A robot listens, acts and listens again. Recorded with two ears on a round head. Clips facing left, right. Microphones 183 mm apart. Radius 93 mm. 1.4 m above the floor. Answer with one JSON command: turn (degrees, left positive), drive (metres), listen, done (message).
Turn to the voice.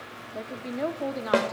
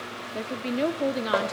{"turn": -35}
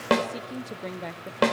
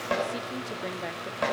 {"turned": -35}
{"done": "Found it: a woman speaking, straight ahead."}